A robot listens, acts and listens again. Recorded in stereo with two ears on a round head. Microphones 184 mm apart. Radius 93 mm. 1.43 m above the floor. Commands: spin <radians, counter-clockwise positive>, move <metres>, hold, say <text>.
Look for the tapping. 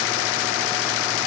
hold
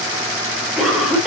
hold
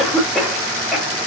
say I can't make out tapping to turn to.